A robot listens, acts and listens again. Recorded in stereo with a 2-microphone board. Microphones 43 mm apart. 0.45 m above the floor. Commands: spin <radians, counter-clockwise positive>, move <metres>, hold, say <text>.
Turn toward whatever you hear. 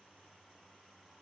hold
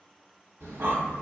spin -1.22
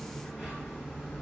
say Facing the breathing.